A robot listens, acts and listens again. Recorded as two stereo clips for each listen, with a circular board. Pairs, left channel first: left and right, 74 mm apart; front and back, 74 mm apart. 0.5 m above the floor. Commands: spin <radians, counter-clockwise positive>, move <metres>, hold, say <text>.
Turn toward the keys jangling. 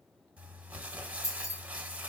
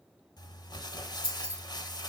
spin 2.18
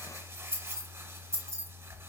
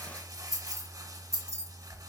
spin -0.79
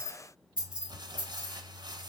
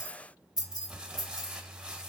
spin -0.35
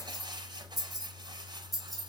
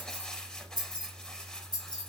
say Found it: keys jangling, straight ahead, 2 to 4 m away.